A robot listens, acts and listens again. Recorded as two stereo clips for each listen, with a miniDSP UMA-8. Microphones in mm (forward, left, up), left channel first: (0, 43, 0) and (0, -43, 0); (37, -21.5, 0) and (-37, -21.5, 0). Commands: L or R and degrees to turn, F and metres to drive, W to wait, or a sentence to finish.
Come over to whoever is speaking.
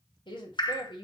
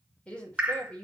L75
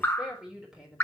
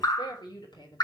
R10
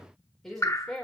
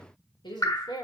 F1.0
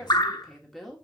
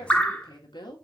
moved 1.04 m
F1.0
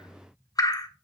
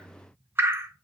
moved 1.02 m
W
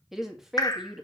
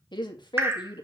F1.0
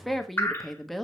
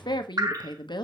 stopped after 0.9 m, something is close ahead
I am next to the woman speaking.